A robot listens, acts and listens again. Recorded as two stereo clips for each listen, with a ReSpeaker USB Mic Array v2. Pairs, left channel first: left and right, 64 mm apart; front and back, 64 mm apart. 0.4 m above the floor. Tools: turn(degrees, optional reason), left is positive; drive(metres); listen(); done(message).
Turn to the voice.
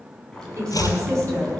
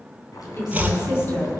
turn(degrees=-45, reason="The woman speaking: 45° right.")
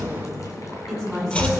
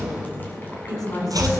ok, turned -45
done("Facing the woman speaking, over 4 m away.")